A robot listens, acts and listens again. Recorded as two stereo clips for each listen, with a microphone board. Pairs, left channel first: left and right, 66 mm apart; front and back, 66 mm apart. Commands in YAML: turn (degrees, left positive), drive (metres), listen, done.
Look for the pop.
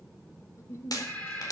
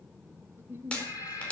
turn: 70
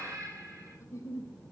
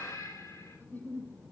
done: "Facing where the pop came from. I can't hear it now."